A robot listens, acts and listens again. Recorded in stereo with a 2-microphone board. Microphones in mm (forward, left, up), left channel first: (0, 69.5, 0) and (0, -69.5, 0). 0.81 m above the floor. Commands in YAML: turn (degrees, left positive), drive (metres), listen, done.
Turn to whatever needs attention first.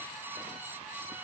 listen: true
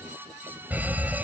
turn: -30
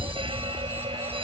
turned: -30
turn: -140
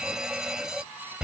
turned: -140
done: "Facing the alarm."